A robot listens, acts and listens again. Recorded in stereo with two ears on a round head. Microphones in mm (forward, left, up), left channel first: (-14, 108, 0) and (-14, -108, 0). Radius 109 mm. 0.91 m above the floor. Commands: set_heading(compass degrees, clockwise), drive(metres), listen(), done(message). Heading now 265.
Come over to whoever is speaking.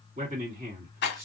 set_heading(295)
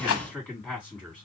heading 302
drive(1.0)
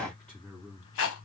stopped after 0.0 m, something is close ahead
done("Blocked. The man speaking is further on, straight ahead.")